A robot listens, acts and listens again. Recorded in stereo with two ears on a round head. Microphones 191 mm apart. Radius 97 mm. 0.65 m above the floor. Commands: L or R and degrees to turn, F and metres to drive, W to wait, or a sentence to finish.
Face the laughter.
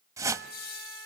L50
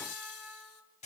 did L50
L80
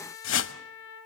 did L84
W
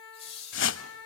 L30
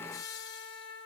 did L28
L20
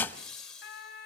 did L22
Found it: laughter, straight ahead.